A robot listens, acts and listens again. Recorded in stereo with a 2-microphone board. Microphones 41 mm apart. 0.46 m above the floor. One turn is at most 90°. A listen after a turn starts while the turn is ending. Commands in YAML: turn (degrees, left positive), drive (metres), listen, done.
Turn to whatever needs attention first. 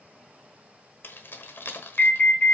turn: 35
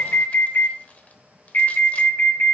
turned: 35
turn: 90
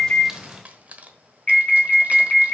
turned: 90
turn: 25
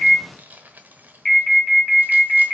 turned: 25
turn: 15
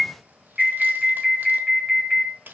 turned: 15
done: "Found it: an alarm, straight ahead."